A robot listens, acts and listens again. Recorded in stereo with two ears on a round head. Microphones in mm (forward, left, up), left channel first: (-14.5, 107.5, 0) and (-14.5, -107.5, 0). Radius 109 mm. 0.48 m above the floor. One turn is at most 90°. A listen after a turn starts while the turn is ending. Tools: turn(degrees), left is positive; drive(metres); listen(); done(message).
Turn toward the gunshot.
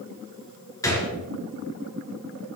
turn(degrees=30)
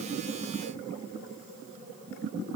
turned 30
listen()
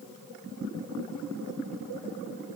done("I heard a gunshot, but can't make it out now. It was about 15° right or 135° left.")